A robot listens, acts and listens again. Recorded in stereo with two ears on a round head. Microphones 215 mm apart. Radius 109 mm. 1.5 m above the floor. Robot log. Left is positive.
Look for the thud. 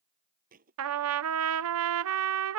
note: The thud: about 35° right or 145° right.
cmd yaw -35
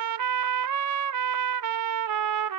cmd idle
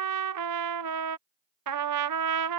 end: I heard a thud, but can't make it out now. It was about straight ahead or 110° right.